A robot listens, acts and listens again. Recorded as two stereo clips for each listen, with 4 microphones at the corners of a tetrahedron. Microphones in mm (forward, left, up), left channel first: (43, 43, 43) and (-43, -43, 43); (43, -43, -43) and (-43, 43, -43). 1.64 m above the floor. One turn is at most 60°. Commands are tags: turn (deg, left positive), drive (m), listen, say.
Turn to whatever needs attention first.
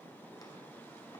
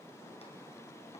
<listen/>
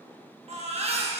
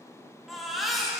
<turn deg="-60"/>
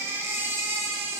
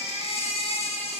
<turn deg="-60"/>
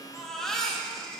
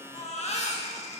<turn deg="-40"/>
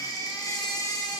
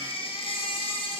<turn deg="-10"/>
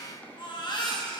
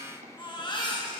<say>Facing the baby crying.</say>